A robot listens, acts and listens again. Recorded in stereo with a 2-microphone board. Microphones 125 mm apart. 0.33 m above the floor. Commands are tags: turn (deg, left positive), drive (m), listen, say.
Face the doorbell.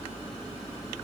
<listen/>
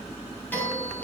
<turn deg="30"/>
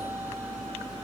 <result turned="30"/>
<listen/>
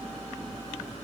<listen/>
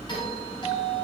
<turn deg="135"/>
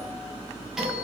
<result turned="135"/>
<say>Facing the doorbell.</say>